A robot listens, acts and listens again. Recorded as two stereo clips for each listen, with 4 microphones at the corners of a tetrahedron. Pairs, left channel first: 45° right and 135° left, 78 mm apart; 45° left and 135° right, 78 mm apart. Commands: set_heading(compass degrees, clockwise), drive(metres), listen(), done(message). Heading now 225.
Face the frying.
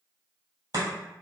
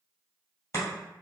listen()
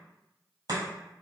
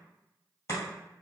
listen()
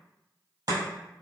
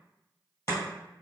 done("I can't make out frying, only chopping.")